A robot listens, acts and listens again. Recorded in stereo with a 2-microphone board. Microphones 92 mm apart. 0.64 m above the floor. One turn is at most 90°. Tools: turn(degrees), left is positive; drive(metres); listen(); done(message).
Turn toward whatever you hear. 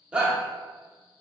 turn(degrees=-30)
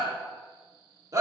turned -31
turn(degrees=-90)
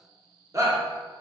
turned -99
turn(degrees=-40)
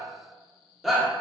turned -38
done("Found it: a shout, straight ahead, 1 to 2 m away.")